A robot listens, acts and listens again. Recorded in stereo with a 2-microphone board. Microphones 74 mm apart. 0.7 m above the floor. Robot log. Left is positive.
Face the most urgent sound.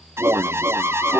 note: The alarm: about 30° right or 150° right.
cmd yaw -30
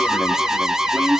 end: Found it: an alarm, straight ahead, under 1 m away.